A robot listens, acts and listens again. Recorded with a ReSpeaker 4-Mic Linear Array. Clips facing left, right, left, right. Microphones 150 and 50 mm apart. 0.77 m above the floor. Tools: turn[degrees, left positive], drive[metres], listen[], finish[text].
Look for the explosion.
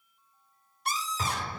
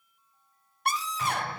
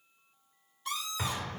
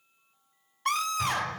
Thought: The explosion: about 45° left or 135° left.
Action: turn[45]
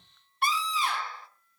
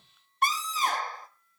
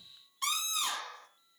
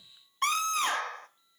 Action: listen[]
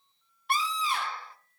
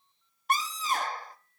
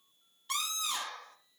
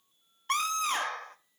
Action: finish[I heard an explosion, but can't make it out now. It was about straight ahead or 90° left.]